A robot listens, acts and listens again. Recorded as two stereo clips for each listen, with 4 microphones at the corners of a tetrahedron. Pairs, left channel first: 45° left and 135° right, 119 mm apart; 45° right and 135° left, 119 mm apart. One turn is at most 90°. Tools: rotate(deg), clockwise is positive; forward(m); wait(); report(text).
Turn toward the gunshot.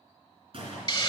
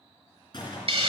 rotate(90)
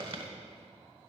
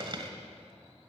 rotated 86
rotate(15)
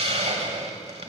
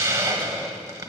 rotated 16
report("Facing where the gunshot came from. I can't hear it now.")